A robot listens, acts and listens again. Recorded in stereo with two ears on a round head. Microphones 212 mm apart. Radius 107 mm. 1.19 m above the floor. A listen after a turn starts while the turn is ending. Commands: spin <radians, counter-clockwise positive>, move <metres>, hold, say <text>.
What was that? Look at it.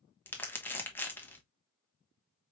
spin 0.52
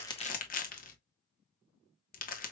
spin 2.44
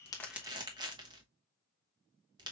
spin -0.35
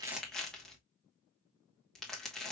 say Facing the crumpling.